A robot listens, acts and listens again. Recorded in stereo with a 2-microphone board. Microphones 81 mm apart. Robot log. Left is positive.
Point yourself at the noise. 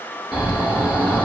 cmd yaw -30
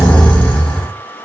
note: So it is at 25° left.
cmd yaw +25
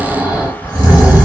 note: The snoring is now 20° right.
cmd yaw -20
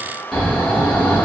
end: Facing the snoring, 1 to 2 m away.